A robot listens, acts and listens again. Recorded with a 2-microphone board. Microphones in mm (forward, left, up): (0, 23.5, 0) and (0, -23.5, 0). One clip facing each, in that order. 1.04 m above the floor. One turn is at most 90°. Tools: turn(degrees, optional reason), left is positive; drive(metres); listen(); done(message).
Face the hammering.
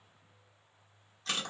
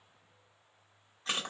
listen()
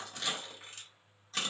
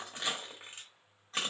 listen()
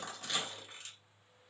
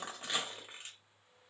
done("I can't make out hammering, only crushing.")